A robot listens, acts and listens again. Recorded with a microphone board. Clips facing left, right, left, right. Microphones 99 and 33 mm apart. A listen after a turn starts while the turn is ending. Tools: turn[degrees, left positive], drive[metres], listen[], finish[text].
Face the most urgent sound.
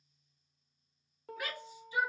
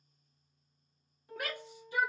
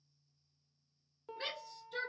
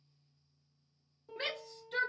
Thought: The shout: about 60° right or 120° right.
Action: turn[-60]
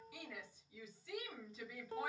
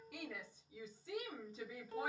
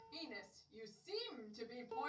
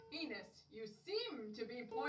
Thought: So it is at 35° right.
Action: turn[-35]
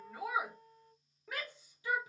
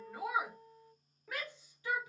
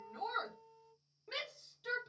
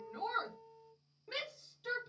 Thought: The shout is now 10° left.
Action: turn[10]
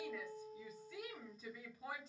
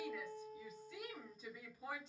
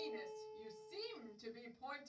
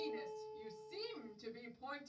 Action: finish[Facing the shout, 1 to 2 m away.]